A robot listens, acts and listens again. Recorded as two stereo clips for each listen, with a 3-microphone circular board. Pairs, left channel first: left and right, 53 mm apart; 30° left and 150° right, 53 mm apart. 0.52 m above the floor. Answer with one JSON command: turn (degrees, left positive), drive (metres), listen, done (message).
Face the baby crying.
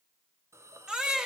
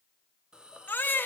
{"turn": -15}
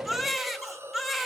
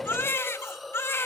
{"done": "Found it: a baby crying, straight ahead."}